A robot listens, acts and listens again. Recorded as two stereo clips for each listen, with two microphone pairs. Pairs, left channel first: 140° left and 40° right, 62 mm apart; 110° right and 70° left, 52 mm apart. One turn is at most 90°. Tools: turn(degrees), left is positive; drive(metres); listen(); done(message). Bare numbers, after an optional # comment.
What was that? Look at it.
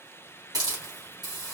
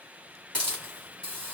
# The hiss: 35° right.
turn(-35)
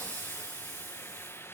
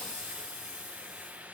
done("Facing the hiss, 2 to 4 m away.")